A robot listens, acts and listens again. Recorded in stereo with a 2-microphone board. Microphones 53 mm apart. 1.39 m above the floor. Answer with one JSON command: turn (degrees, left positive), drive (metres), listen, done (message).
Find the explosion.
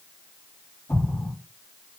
{"turn": 70}
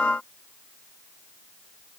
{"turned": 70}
{"listen": true}
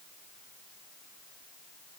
{"done": "I heard an explosion, but can't make it out now. It was about straight ahead or 40° left."}